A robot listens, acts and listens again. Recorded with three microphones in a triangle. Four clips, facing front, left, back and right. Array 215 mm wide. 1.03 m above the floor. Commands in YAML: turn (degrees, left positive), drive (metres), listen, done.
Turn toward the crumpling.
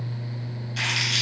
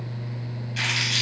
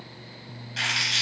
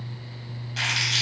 turn: -90
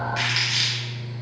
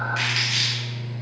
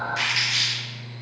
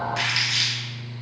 turn: 15
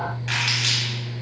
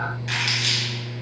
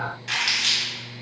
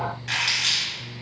done: "Found it: crumpling, straight ahead."